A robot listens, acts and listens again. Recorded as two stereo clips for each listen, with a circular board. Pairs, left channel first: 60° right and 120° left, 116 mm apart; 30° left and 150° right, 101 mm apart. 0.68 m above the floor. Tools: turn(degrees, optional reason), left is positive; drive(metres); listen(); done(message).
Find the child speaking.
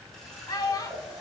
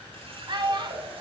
turn(degrees=-115, reason="The child speaking: 115° right.")
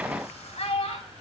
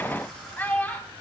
turn(degrees=-45, reason="The child speaking is now 45° right.")
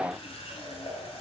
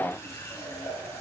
listen()
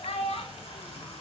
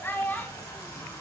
turn(degrees=-40, reason="The child speaking is now 40° right.")
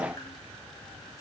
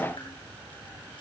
listen()
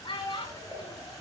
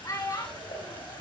turn(degrees=-20, reason="The child speaking is now 20° right.")
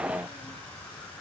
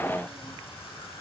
listen()
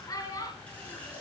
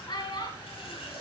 done("Facing the child speaking.")